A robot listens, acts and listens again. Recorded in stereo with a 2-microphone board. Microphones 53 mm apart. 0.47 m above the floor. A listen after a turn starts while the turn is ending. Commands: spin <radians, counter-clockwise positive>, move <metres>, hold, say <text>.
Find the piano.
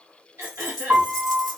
spin -0.61
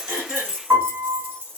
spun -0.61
spin -1.83
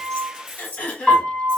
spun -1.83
say Found it: a piano, straight ahead, 1 to 2 m away.